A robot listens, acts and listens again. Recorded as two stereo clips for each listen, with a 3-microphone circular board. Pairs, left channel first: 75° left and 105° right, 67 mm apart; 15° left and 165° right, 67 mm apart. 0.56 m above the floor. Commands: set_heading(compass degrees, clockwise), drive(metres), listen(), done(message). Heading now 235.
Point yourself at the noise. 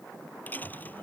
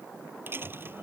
set_heading(95)
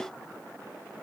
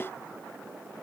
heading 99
done("I heard a dropped coin from this way, but can't make it out now.")